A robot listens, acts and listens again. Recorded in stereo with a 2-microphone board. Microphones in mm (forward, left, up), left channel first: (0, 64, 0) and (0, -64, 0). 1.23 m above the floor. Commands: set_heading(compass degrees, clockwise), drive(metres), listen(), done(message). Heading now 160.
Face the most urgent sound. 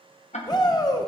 set_heading(125)
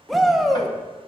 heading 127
done("Found it: a shout, straight ahead, 1 to 2 m away.")